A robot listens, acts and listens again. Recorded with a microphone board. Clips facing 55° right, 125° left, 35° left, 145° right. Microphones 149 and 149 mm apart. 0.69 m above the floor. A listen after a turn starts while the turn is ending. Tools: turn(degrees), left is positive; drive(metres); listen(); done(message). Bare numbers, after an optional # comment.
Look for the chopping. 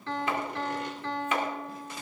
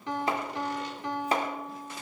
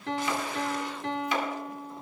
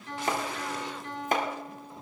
# The chopping: 175° left.
turn(175)
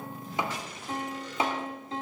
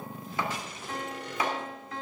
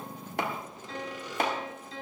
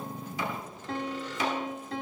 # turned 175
# The chopping is now 10° left.
turn(10)
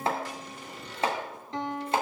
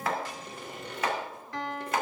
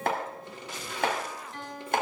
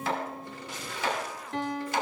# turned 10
done("Found it: chopping, straight ahead.")